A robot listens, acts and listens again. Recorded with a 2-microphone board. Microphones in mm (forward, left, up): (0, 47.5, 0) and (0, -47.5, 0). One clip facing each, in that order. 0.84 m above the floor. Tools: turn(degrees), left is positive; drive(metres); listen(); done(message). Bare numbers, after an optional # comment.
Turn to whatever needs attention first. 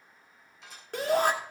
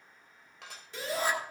# The shout: about 55° left or 125° left.
turn(55)
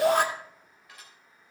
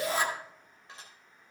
# So it is at 70° left.
turn(70)
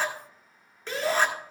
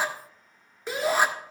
# The shout is now 10° right.
turn(-10)
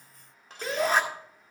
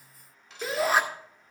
done("Found it: a shout, straight ahead.")